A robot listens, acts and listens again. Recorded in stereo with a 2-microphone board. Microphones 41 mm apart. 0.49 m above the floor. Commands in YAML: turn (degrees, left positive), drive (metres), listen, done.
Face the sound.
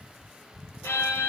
turn: 90
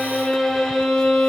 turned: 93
done: "Found it: a violin, straight ahead, 1 to 2 m away."